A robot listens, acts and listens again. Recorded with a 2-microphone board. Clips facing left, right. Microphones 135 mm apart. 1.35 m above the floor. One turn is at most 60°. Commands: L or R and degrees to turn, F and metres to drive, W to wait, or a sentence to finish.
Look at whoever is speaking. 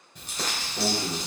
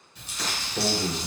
R20
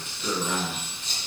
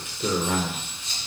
R60
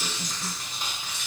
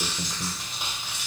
R60
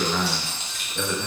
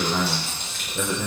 R15
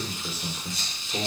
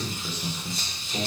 L10
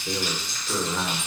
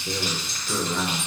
Facing the man speaking, 1 to 2 m away.